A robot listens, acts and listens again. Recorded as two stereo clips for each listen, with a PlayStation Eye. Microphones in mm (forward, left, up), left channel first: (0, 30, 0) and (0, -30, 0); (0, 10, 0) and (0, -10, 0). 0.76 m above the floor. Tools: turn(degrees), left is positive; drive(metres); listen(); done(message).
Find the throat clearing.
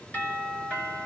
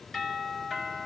listen()
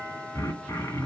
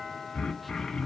turn(degrees=65)
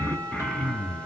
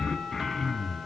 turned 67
turn(degrees=20)
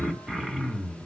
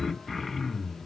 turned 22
done("Found it: throat clearing, straight ahead.")